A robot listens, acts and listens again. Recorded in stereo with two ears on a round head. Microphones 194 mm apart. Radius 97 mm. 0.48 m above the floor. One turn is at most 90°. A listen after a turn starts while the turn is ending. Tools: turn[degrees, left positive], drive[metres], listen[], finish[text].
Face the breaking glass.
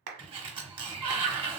Action: listen[]
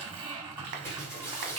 Action: turn[30]
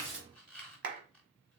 Action: listen[]
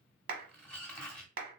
Action: finish[I heard breaking glass, but can't make it out now. It was about 20° right or 140° left.]